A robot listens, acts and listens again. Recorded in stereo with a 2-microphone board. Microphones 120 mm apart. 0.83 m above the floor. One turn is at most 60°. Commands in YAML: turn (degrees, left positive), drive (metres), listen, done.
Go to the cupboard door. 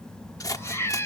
listen: true
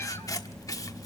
listen: true
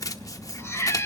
done: "I can't make out a cupboard door, only scissors and a cat meowing."